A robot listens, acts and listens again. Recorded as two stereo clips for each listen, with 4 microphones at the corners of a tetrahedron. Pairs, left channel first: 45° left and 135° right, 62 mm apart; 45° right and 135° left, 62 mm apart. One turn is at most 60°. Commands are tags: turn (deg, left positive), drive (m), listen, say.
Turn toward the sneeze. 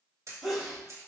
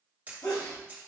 <turn deg="-45"/>
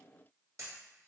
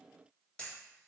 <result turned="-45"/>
<say>Facing where the sneeze came from. I can't hear it now.</say>